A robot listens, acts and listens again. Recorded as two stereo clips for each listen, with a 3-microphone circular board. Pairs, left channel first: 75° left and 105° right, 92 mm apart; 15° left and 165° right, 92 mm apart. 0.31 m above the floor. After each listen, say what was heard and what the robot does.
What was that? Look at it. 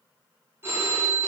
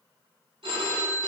The phone ringing: 170° right. Turn 170° right.
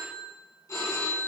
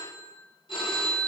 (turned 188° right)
The phone ringing is now 20° left. Turn 20° left.
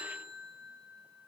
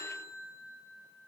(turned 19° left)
Facing the phone ringing.